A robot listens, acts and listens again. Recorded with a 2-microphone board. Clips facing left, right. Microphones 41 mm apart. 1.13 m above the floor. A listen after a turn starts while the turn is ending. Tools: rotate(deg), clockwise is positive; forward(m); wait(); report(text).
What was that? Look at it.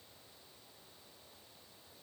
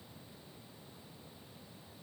wait()
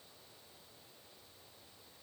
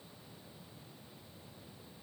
wait()
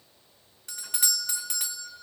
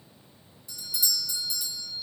rotate(-55)
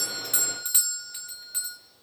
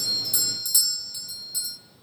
rotate(-45)
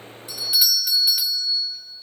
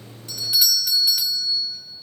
report("Found it: a doorbell, straight ahead, under 1 m away.")